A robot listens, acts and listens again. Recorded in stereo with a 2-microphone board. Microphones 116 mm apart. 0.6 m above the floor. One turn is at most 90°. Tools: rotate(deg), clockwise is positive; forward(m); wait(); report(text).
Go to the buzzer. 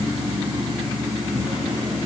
wait()
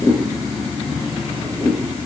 wait()
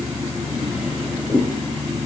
report("I can't make out a buzzer, only a drawer.")